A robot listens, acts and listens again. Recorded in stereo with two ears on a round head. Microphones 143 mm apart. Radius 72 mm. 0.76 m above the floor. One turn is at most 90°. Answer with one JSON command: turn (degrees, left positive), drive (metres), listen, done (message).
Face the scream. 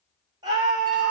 {"turn": -30}
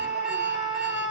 {"done": "Found it: a scream, straight ahead, 2 to 4 m away."}